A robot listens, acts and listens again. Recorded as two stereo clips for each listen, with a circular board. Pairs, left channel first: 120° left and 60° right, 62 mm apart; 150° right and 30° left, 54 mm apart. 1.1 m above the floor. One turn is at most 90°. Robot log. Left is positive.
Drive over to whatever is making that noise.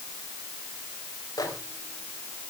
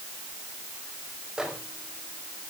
note: The microwave: 110° left.
cmd yaw +90
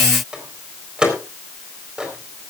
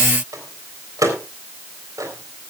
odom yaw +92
note: The microwave is now 15° left.
cmd yaw +15
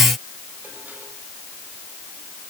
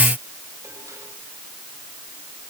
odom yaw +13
cmd idle
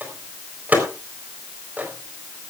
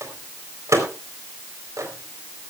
cmd fwd 1.0
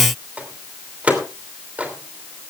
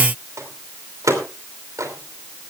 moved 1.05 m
cmd fwd 1.0
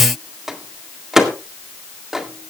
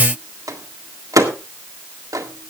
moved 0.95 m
note: The microwave is now 20° left.
cmd yaw +20
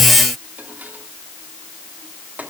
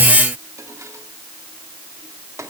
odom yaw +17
cmd idle
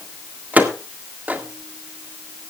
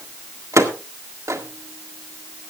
cmd fwd 1.0
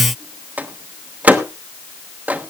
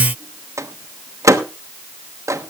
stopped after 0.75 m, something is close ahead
end: I am next to the microwave.